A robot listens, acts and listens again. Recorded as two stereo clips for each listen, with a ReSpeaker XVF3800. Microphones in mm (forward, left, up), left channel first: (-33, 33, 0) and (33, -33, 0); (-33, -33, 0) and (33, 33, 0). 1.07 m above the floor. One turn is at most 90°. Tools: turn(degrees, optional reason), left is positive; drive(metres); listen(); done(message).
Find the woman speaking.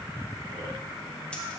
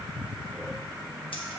listen()
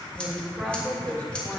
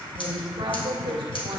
turn(degrees=60, reason="The woman speaking: 60° left.")
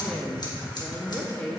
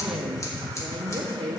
turn(degrees=60, reason="The woman speaking is now 60° left.")
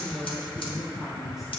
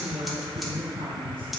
turn(degrees=40, reason="The woman speaking is now 40° left.")
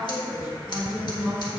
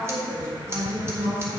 turn(degrees=15, reason="The woman speaking is now 15° left.")
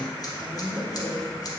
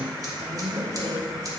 done("Found it: a woman speaking, straight ahead, 2 to 4 m away.")